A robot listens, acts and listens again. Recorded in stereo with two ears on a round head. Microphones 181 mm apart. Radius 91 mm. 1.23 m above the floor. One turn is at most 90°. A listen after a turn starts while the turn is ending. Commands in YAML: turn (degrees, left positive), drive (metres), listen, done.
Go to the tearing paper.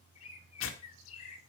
turn: 70
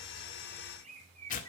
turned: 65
turn: 40
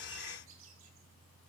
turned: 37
listen: true
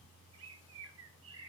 listen: true
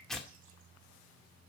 drive: 1.0
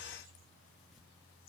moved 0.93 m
listen: true
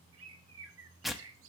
drive: 1.0
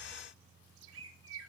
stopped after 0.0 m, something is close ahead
listen: true
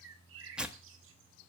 done: "I am next to the tearing paper."